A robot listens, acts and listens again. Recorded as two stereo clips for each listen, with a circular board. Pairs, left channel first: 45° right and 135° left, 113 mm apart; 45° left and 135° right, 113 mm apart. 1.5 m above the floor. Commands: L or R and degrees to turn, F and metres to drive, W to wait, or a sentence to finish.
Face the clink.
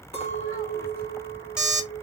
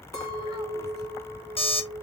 R15
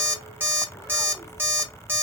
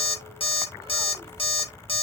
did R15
W
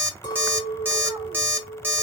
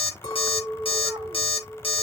Found it: a clink, straight ahead, 2 to 4 m away.